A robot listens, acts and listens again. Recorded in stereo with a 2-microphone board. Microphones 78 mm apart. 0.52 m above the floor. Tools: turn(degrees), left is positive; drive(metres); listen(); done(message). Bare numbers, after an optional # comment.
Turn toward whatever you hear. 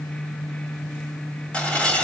turn(30)
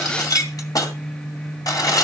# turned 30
# So it is at 135° left.
turn(135)
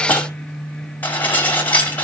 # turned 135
# The dishes clattering is now 20° left.
turn(20)
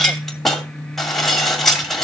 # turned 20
done("Found it: dishes clattering, straight ahead, 2 to 4 m away.")